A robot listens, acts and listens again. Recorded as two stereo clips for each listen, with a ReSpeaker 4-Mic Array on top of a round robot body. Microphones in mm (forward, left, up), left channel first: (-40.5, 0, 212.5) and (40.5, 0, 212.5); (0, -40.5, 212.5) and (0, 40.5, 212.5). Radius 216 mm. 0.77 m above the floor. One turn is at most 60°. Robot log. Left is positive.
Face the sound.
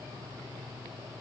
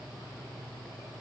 cmd idle
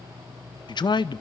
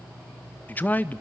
note: The man speaking: 155° right.
cmd yaw -60
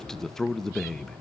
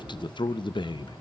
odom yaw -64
note: The man speaking is now 95° right.
cmd yaw -60
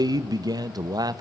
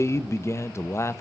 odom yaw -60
note: The man speaking is now 35° right.
cmd yaw -35
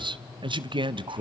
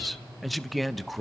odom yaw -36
end: Facing the man speaking, under 1 m away.